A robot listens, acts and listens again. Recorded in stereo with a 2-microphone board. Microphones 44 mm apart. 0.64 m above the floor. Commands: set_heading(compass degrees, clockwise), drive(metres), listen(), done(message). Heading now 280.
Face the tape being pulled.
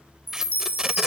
set_heading(310)
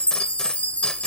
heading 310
listen()
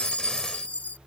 listen()
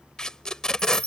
set_heading(295)
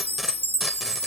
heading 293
listen()
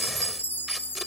listen()
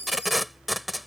done("Facing the tape being pulled.")